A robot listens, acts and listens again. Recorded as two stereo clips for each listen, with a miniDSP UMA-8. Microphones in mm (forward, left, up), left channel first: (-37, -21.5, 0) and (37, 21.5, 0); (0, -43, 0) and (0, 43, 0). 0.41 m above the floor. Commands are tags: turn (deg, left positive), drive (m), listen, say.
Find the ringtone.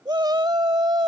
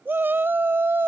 <listen/>
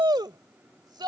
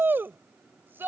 <listen/>
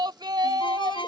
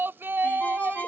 <turn deg="-160"/>
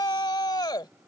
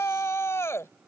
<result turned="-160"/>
<listen/>
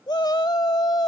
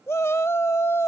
<listen/>
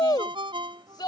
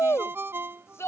<turn deg="30"/>
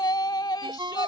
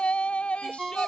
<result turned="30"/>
<say>Found it: a ringtone, straight ahead.</say>